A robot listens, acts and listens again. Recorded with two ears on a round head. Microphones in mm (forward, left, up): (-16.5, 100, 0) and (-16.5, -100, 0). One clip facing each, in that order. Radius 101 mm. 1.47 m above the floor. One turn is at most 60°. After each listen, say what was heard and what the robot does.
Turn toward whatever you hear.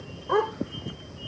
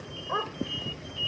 The dog barking: about 65° left or 115° left. Turn 60° left.
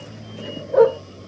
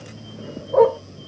So it is at 10° left. Turn 10° left.
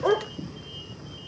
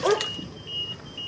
Found it: a dog barking, straight ahead.